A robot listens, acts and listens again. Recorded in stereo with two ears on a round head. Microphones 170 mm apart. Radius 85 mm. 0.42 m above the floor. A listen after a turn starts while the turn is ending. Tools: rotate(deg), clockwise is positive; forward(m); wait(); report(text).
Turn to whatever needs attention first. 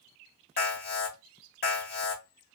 rotate(-50)
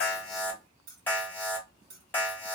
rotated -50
rotate(-10)
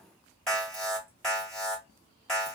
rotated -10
report("Found it: an alarm, straight ahead.")